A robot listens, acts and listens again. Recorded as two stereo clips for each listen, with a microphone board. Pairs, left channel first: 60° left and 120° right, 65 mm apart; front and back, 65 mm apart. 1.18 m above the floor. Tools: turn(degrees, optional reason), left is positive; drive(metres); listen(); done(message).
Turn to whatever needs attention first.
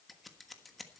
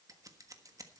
listen()
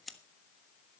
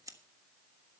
listen()
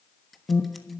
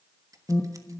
turn(degrees=20, reason="The alarm: 20° left.")
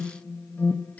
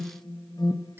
done("Facing the alarm.")